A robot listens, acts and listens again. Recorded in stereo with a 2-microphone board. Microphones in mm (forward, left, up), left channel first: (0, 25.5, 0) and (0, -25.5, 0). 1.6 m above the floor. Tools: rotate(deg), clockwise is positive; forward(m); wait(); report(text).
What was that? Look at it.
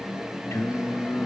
rotate(-90)
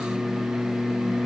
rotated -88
rotate(-25)
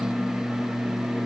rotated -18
rotate(-20)
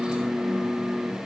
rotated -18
rotate(-10)
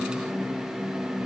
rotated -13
wait()
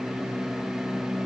report("Found it: singing, straight ahead.")